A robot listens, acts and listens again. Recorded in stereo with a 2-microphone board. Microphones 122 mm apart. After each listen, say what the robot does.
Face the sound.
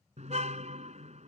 Turn 70° right.
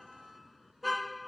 Facing the car horn.